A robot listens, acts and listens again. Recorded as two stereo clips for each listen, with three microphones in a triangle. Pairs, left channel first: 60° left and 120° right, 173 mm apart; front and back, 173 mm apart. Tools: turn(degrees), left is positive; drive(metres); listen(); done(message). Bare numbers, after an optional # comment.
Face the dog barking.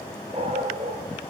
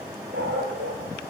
# The dog barking: 175° right.
turn(-175)
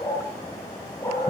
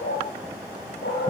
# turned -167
# The dog barking is now 10° right.
turn(-10)
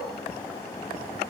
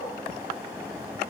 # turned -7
listen()
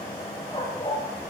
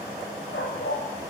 done("Facing the dog barking.")